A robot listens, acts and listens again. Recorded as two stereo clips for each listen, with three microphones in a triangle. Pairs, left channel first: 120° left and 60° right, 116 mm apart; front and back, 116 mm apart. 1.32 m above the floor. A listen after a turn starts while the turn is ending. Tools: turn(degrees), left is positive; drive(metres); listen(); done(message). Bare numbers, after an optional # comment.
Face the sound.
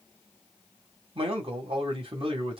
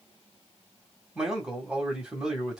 # The man speaking: 95° right.
turn(-95)
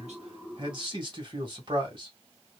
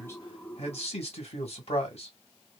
# The man speaking is now 20° right.
turn(-20)
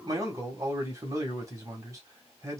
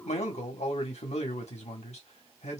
done("Found it: a man speaking, straight ahead, 1 to 2 m away.")